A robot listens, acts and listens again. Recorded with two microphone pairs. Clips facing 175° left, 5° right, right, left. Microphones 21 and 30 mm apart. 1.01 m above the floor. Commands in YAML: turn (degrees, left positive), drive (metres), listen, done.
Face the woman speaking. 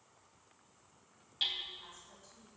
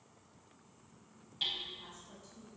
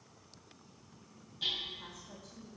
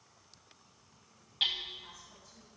turn: -90
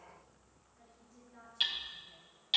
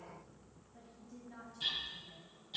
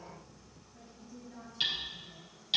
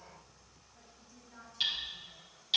done: "Facing the woman speaking."